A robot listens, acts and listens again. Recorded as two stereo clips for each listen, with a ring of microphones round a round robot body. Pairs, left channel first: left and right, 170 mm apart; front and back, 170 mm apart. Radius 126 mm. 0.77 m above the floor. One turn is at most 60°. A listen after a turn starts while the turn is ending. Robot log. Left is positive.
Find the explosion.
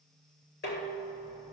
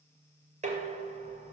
cmd idle
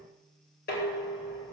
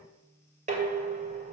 cmd idle
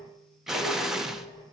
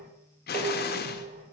end: Facing the explosion.